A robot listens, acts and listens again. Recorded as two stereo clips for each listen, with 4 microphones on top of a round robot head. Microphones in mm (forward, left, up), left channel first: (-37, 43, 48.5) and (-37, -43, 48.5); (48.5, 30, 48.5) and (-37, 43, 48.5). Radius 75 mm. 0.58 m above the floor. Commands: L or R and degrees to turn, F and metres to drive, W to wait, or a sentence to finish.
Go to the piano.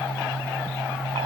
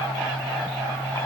W
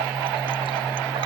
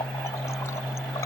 W
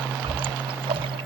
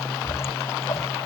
I can't make out a piano to turn to.